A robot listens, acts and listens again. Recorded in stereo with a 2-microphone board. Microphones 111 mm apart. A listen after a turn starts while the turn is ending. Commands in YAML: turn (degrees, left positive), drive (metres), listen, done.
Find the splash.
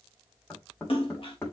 turn: 55
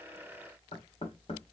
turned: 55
listen: true
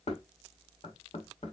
done: "I heard a splash, but can't make it out now. It was about straight ahead or 70° left."